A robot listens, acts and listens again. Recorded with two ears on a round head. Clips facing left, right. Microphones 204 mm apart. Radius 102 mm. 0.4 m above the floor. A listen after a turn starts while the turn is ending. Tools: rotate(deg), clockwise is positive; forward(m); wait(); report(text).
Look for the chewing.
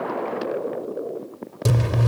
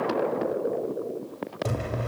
rotate(-55)
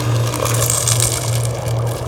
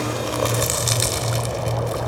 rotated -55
rotate(-20)
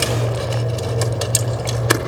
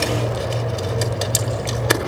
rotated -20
report("Facing the chewing, 1 to 2 m away.")